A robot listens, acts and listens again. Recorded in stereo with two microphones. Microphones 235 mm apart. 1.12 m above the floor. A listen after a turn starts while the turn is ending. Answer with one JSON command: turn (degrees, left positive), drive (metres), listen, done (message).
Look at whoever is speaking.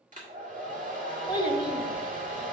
{"turn": 20}
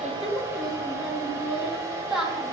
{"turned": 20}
{"done": "Facing the child speaking."}